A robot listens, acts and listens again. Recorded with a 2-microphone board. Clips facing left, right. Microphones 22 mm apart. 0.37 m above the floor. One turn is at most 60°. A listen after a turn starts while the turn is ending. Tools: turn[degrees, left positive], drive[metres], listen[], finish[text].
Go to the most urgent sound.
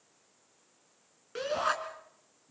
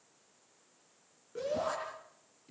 Thought: The shout: about 75° left or 105° left.
Action: turn[60]
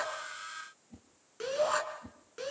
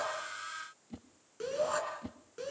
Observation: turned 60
Thought: So it is at 25° left.
Action: turn[25]
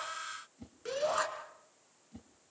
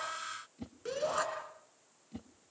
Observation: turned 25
Thought: The shout is now 10° left.
Action: turn[10]
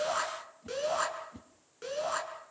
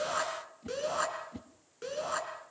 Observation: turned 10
Action: drive[1.0]
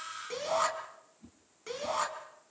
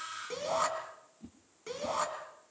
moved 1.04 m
Thought: The shout is now 10° left.
Action: turn[10]
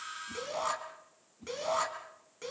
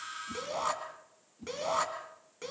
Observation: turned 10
Action: drive[1.0]
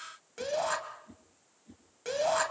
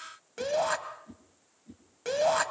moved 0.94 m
Thought: The shout is now 10° right.
Action: turn[-10]
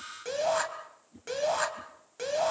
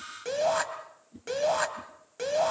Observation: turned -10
Action: drive[1.0]
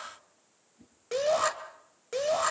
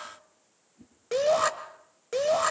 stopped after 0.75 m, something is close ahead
Thought: The shout is now 10° right.
Action: turn[-10]
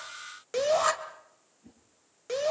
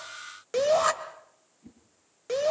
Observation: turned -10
Action: finish[Arrived at the shout, straight ahead.]